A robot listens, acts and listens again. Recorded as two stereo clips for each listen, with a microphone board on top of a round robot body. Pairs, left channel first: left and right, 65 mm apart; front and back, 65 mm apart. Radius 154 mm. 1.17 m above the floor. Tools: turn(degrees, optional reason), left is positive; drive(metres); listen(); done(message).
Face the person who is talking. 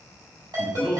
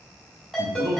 turn(degrees=-160, reason="The man speaking: 160° right.")
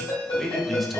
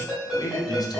done("Facing the man speaking, 1 to 2 m away.")